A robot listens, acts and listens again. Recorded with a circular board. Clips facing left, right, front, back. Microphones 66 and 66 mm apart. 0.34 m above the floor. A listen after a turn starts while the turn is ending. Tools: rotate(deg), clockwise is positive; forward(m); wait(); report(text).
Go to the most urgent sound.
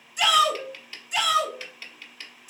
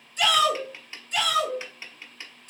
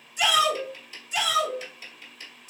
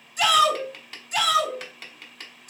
rotate(-165)
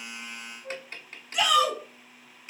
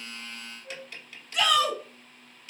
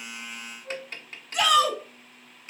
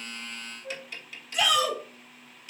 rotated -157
rotate(-10)
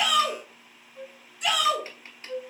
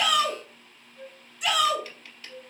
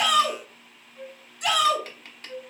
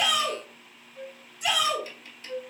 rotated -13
forward(1.0)
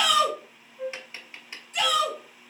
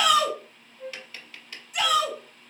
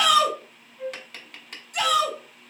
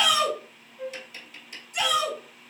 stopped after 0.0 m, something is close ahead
rotate(10)
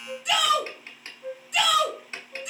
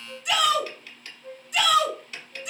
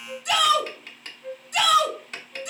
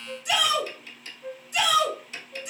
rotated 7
report("Blocked. The shout is further on, straight ahead.")